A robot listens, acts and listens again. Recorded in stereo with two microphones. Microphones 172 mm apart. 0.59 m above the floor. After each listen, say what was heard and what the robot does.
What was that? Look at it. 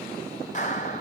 The clap: about 45° left or 135° left. Turn 45° left.
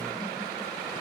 Keep listening.
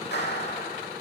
So it is at 90° left. Turn 90° left.
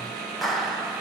Found it: a clap, straight ahead, 2 to 4 m away.